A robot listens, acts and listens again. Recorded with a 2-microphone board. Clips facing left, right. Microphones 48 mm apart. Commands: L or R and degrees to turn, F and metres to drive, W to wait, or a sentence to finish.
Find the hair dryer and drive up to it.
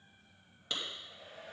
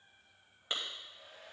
L75
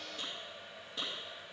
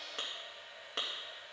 L25
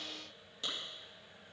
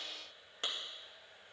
F1.0
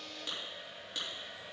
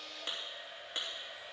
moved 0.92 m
F1.0
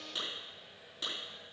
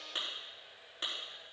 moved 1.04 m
F1.0
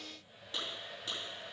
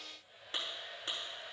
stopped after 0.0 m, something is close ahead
Arrived at the hair dryer, straight ahead.